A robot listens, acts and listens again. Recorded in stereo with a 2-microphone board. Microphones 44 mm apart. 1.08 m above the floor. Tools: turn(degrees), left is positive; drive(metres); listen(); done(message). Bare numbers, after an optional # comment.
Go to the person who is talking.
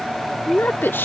# The woman speaking: about 60° left or 120° left.
turn(60)
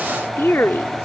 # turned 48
# So it is at 70° left.
turn(70)
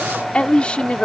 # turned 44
# The woman speaking is now 25° left.
turn(25)
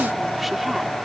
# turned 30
listen()
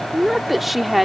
drive(1.0)
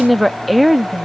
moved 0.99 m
drive(1.0)
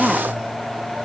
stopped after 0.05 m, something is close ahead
done("Arrived at the woman speaking, straight ahead.")